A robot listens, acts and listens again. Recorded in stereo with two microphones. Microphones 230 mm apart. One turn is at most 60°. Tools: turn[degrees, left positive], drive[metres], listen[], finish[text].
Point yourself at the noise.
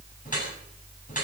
Thought: The dripping: about 35° left or 145° left.
Action: turn[35]
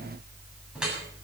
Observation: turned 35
Action: finish[Facing the dripping.]